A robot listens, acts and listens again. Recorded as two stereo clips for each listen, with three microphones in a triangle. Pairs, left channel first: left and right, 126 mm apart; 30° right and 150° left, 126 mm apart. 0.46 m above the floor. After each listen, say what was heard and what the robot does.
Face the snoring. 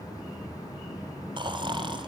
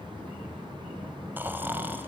The snoring: 135° right. Turn 135° right.
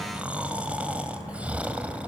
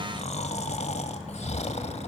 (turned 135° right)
The snoring is now 10° right. Turn 10° right.
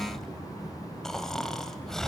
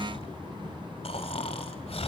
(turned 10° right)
Found it: snoring, straight ahead.